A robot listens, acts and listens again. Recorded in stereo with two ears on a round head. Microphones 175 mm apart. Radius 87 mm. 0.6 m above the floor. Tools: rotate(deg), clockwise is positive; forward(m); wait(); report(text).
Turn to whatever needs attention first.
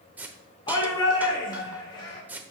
rotate(-25)
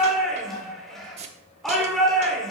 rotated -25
report("Facing the shout.")